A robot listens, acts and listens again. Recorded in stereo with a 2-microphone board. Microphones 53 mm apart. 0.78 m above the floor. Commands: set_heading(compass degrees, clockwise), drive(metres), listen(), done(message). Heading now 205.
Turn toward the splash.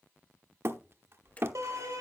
set_heading(175)
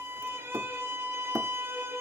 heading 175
listen()
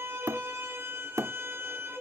done("I heard a splash, but can't make it out now. It was about straight ahead or 120° left.")